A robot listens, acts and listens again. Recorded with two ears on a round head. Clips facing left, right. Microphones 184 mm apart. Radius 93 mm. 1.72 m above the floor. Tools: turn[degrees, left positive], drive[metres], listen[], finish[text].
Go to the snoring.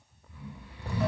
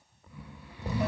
Thought: The snoring: about 70° right or 110° right.
Action: turn[-70]
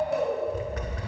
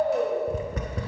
Thought: So it is at 35° right.
Action: turn[-35]
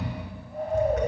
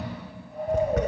Action: drive[1.0]
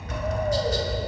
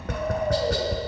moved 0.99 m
Action: listen[]
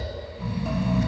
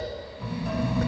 Action: drive[1.0]
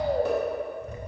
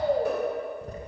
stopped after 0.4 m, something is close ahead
Action: finish[I am next to the snoring.]